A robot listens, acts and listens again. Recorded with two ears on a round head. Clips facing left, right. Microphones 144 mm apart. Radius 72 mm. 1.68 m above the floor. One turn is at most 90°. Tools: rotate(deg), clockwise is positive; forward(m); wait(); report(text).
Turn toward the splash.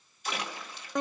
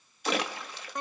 rotate(55)
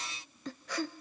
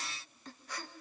wait()
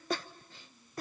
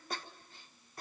report("I heard a splash, but can't make it out now. It was about straight ahead or 70° right.")